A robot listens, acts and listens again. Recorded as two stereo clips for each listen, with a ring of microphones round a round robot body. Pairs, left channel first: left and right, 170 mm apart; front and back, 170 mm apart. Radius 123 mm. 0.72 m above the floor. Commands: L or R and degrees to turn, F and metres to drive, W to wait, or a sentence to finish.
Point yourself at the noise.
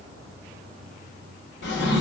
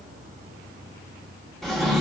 L90
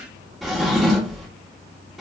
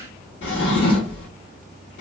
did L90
Found it: a drawer, straight ahead.